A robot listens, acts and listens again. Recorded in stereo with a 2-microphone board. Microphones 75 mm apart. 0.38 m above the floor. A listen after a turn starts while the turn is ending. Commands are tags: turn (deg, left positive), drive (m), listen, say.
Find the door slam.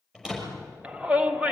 <turn deg="-30"/>
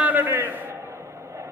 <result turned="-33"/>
<listen/>
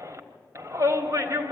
<say>I heard a door slam, but can't make it out now. It was about 25° left or 140° right.</say>